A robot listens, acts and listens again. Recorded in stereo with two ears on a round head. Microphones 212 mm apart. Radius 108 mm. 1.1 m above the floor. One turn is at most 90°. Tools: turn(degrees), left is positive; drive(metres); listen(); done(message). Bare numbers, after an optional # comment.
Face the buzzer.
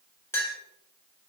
listen()
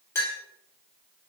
listen()
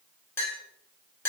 done("I can't make out a buzzer, only a clink.")